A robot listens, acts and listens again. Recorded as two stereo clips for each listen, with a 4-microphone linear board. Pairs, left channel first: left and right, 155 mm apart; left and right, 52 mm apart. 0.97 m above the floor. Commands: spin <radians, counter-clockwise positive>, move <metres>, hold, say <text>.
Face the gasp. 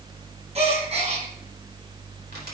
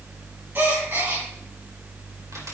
spin -0.70
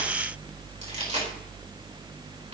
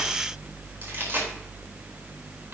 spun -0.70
hold
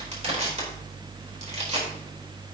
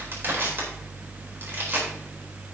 say I heard a gasp, but can't make it out now. It was about straight ahead or 100° right.